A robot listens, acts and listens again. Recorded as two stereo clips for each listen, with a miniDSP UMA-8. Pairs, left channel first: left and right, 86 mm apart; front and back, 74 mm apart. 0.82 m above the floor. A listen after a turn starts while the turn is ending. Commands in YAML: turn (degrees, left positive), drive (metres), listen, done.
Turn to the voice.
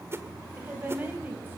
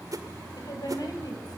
turn: -25
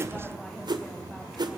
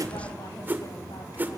listen: true
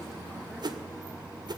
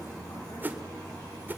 listen: true
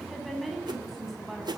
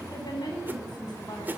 done: "Facing the woman speaking, over 4 m away."